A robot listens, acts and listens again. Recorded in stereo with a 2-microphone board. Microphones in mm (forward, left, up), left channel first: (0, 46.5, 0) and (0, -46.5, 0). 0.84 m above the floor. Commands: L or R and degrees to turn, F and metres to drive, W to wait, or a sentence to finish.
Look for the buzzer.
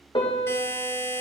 L25
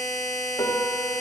Found it: a buzzer, straight ahead, 1 to 2 m away.